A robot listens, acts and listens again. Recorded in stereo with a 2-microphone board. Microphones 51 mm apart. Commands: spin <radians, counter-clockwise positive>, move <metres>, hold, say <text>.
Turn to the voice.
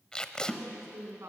spin -1.57
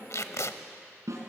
hold
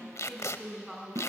say Facing the woman speaking.